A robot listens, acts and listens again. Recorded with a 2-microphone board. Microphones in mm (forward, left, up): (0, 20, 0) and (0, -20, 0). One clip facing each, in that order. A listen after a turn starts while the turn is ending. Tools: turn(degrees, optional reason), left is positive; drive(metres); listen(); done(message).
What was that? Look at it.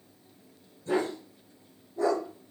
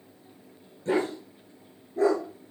turn(degrees=-90)
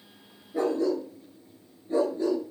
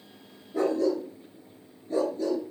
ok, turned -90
turn(degrees=25, reason="So it is at 25° left.")
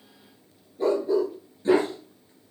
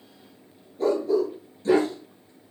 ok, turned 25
turn(degrees=20, reason="The dog barking is now 20° left.")
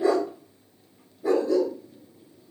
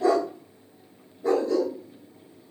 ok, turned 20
done("Facing the dog barking.")